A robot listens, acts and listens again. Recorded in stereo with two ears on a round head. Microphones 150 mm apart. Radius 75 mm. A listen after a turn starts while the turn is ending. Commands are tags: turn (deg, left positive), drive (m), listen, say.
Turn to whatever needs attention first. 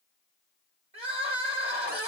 <turn deg="-40"/>
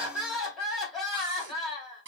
<say>Found it: crying, straight ahead.</say>